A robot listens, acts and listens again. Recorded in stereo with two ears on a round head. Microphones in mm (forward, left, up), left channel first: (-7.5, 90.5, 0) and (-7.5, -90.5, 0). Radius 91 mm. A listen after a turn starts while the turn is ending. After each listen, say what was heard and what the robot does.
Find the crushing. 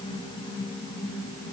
Keep listening.
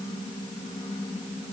Keep listening.
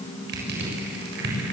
The crushing: about 60° right or 120° right. Turn 60° right.
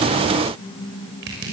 So it is at 60° right. Turn 60° right.
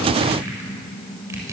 The crushing is now 15° right. Turn 15° right.
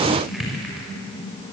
Found it: crushing, straight ahead.